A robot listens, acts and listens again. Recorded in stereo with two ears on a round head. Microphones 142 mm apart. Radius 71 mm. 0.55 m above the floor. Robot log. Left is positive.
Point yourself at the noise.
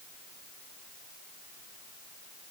cmd idle
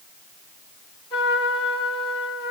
note: The trumpet: about 35° left or 145° left.
cmd yaw +35
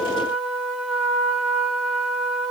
end: Facing the trumpet, over 4 m away.